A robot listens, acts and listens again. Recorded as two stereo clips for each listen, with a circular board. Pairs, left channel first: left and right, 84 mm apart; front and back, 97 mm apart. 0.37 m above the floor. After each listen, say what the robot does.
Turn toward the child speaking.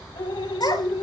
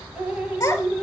Turn 65° left.
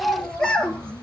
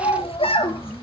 Turn 10° left.
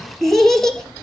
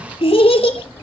Facing the child speaking, 2 to 4 m away.